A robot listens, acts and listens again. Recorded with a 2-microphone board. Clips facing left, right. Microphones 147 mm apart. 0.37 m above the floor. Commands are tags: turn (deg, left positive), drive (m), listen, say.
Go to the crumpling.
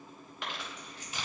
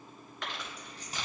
<turn deg="30"/>
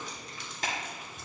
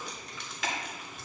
<turn deg="140"/>
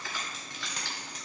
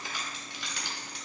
<turn deg="-15"/>
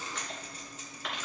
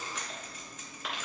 <drive m="1.0"/>
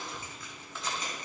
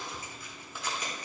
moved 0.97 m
<turn deg="-10"/>
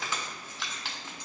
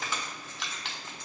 <drive m="1.0"/>
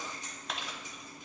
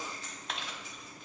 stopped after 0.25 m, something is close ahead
<say>Arrived at the crumpling, straight ahead.</say>